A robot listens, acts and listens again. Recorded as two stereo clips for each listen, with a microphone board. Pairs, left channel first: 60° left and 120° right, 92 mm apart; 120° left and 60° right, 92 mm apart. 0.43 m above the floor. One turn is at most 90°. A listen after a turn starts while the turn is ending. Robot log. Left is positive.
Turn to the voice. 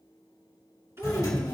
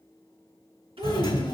note: The child speaking: 60° right.
cmd yaw -60
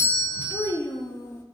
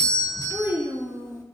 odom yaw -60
end: Found it: a child speaking, straight ahead.